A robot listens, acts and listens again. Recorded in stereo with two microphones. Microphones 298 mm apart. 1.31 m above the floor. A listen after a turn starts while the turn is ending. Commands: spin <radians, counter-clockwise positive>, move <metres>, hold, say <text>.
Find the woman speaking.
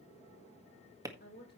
spin 0.61
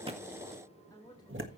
spin 0.26
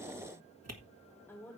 spin 0.17
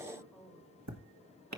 say Found it: a woman speaking, straight ahead.